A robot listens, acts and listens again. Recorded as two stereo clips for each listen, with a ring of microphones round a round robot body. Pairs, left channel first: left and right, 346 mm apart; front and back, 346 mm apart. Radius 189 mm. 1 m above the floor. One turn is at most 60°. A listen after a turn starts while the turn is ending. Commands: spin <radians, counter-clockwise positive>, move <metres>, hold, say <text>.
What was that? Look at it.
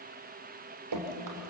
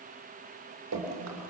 spin -1.05
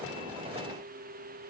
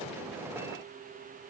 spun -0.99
spin -1.05
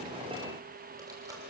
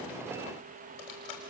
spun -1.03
spin -0.17
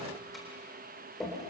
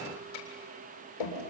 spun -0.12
say Found it: dripping, straight ahead.